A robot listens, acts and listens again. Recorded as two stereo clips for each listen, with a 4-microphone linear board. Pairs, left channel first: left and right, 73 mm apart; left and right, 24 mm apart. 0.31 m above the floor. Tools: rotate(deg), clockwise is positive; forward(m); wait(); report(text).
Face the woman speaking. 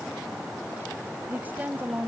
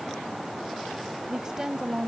rotate(25)
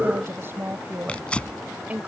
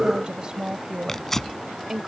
rotate(20)
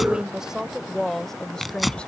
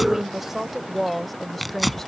rotate(-10)
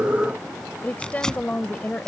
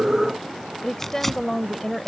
rotate(-20)
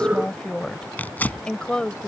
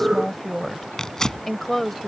rotate(-15)
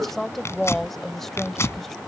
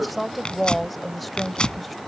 report("Found it: a woman speaking, straight ahead.")